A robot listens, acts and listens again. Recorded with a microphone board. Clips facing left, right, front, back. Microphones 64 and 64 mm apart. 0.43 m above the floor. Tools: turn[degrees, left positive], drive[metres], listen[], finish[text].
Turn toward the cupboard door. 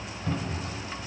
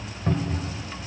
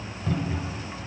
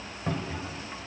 Thought: The cupboard door: 130° right.
Action: turn[-130]
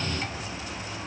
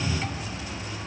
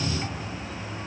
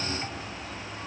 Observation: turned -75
Thought: The cupboard door is now 55° right.
Action: turn[-55]
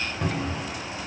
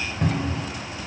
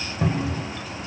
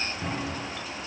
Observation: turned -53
Action: finish[Found it: a cupboard door, straight ahead, 1 to 2 m away.]